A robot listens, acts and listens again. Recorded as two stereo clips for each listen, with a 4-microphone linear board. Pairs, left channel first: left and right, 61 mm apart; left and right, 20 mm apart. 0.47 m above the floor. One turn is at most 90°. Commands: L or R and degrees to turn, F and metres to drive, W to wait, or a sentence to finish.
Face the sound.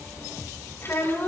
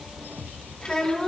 L45
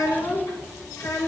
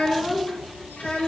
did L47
L90
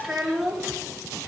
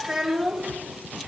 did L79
Facing the child speaking, over 4 m away.